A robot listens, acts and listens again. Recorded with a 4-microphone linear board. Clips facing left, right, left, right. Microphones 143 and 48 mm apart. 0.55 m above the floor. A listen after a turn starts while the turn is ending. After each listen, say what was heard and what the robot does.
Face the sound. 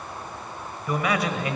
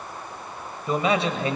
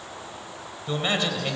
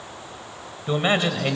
The man speaking: about 30° right or 150° right. Turn 30° right.
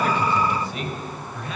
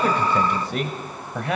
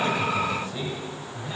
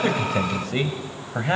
So it is at 105° right. Turn 105° right.
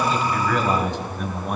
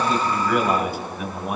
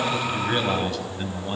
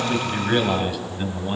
Found it: a man speaking, straight ahead, 2 to 4 m away.